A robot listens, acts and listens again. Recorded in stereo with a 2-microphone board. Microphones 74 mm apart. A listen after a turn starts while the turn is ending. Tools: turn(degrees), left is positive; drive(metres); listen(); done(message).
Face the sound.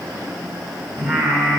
turn(degrees=-40)
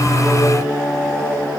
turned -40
done("Facing the singing.")